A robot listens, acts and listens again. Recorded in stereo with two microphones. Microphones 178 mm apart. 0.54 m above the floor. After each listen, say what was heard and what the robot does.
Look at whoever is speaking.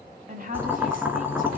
The woman speaking: about 55° right or 125° right. Turn 55° right.
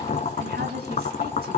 Keep listening.
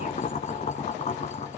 Keep listening.
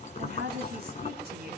So it is at 70° right. Turn 70° right.
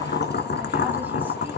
Keep listening.
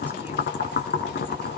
Keep listening.
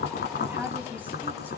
The woman speaking is now 10° right. Turn 10° right.
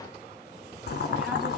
Keep listening.
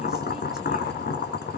Keep listening.
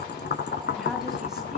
Facing where the woman speaking came from. I can't hear it now.